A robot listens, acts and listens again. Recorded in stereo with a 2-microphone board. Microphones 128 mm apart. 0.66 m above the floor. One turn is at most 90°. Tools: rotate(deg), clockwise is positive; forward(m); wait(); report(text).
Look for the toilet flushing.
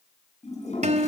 rotate(-60)
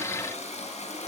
rotate(-60)
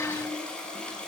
rotate(-10)
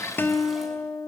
wait()
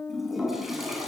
report("Found it: a toilet flushing, straight ahead, over 4 m away.")